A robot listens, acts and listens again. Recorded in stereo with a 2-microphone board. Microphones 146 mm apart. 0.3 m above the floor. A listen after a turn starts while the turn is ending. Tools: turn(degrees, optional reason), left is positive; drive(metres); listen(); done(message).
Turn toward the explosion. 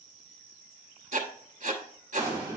turn(degrees=20, reason="The explosion: about 20° left or 160° left.")
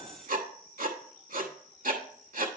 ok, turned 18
listen()
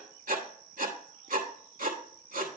done("I heard an explosion, but can't make it out now. It was about straight ahead or 145° left.")